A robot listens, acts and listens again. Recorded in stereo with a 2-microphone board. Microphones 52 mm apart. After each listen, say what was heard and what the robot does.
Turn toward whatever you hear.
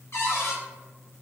The cupboard door: about 60° left or 120° left. Turn 60° left.
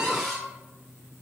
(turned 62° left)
Facing the cupboard door.